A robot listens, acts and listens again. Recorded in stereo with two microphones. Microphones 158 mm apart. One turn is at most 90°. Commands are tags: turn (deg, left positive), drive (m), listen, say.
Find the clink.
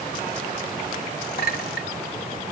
<turn deg="75"/>
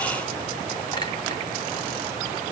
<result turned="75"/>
<listen/>
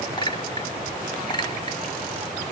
<turn deg="30"/>
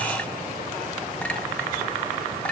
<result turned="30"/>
<turn deg="10"/>
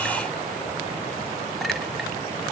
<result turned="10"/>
<listen/>
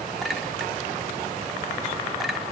<listen/>
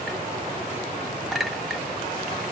<say>Facing the clink.</say>